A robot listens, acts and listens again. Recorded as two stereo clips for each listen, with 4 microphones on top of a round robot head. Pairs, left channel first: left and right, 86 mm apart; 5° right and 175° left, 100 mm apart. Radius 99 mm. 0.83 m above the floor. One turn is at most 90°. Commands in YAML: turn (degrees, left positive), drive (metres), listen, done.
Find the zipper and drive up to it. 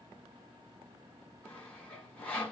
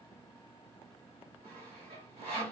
listen: true
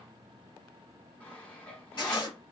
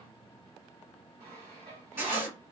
turn: 90
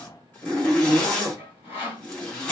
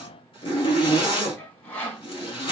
turn: 20
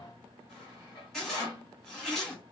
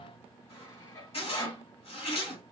drive: 1.0
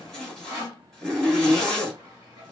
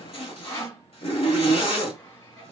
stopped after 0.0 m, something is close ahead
turn: 10
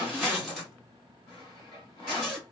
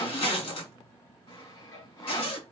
done: "Blocked. The zipper is further on, straight ahead."